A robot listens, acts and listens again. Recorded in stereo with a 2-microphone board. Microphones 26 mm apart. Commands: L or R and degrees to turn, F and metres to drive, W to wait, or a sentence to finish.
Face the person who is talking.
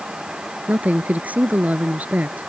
R70
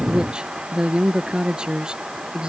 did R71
R35
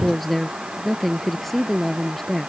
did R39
Facing the woman speaking.